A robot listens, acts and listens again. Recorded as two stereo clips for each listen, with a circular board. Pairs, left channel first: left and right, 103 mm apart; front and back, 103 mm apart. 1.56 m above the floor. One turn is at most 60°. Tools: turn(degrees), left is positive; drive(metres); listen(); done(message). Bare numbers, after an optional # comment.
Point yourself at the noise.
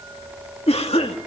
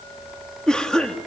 # The cough: 85° left.
turn(60)
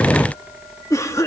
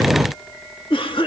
# The cough is now 30° left.
turn(30)
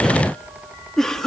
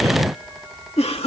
done("Found it: a cough, straight ahead.")